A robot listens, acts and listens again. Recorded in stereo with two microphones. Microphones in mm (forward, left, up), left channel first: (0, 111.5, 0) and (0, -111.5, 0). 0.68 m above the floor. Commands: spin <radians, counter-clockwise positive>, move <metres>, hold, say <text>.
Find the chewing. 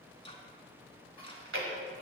spin -1.13
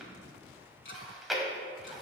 say Facing the chewing.